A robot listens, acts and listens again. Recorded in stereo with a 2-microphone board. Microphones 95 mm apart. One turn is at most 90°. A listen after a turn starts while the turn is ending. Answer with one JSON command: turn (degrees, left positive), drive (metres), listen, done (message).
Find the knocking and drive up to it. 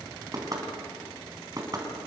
{"turn": -40}
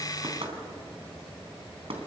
{"turn": -90}
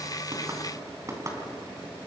{"turn": -35}
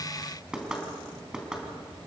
{"turn": -10}
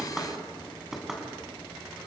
{"drive": 1.0}
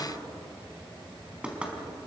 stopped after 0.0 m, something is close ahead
{"turn": -10}
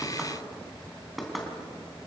{"done": "Blocked. The knocking is further on, straight ahead."}